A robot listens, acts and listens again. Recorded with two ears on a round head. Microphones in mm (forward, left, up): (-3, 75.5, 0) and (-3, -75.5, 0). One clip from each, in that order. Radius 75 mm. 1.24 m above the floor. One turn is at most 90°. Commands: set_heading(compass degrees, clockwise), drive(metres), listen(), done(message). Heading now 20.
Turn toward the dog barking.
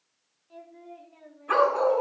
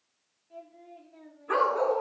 set_heading(310)
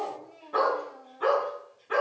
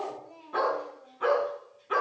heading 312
set_heading(322)
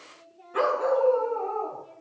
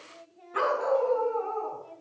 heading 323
set_heading(333)
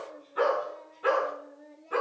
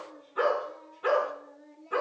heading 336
done("Found it: a dog barking, straight ahead, over 4 m away.")